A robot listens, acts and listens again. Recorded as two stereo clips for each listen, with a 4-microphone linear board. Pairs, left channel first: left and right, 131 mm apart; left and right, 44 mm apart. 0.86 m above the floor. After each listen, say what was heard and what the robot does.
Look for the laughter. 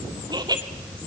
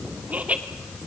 The laughter: about 30° right or 150° right. Turn 30° right.
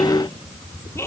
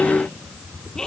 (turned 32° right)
So it is at 20° left. Turn 20° left.
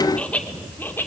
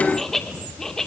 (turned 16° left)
The laughter is now 15° left. Turn 15° left.
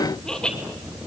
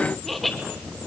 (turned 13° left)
Facing the laughter, 2 to 4 m away.